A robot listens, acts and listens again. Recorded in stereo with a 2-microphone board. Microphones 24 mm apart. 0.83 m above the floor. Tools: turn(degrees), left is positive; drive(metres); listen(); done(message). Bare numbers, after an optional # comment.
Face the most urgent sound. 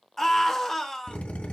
turn(30)
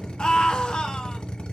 # So it is at 140° left.
turn(140)
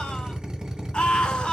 # The scream is now 55° left.
turn(55)
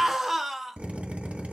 # The scream is now 10° right.
turn(-10)
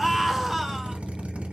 done("Found it: a scream, straight ahead, 1 to 2 m away.")